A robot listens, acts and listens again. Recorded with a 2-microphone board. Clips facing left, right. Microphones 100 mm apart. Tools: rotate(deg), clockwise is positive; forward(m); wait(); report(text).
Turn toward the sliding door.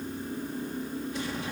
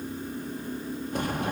rotate(50)
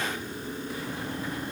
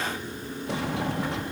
rotate(80)
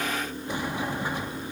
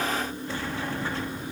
rotate(-15)
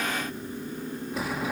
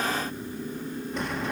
report("Found it: a sliding door, straight ahead.")